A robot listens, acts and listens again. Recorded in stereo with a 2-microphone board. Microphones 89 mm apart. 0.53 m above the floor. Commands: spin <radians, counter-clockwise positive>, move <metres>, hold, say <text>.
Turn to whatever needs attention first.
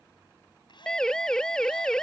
spin 0.52
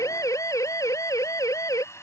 spin 2.44
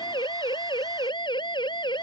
spin 1.05
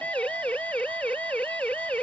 spin 0.26
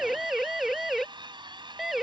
say Found it: a siren, straight ahead.